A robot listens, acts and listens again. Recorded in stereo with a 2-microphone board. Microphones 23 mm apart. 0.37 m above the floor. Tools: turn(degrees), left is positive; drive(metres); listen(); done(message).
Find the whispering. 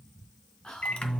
turn(degrees=35)
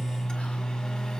listen()
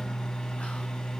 listen()
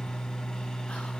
done("I heard whispering, but can't make it out now. It was about straight ahead or 110° left.")